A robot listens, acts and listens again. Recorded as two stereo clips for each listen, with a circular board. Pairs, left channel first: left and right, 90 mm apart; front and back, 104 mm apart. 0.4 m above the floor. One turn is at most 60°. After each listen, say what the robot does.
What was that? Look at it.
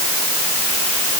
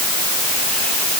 Keep listening.
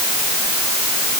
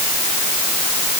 Keep listening.
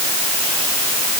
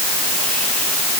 I can't make out anything to turn to.